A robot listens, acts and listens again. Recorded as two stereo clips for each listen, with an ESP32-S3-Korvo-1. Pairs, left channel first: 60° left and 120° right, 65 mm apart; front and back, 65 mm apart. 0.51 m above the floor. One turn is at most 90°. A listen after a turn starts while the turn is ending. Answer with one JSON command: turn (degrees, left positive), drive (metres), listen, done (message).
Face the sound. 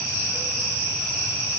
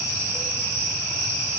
{"listen": true}
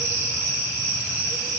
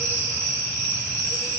{"listen": true}
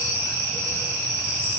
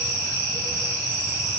{"done": "I can't make out anything to turn to."}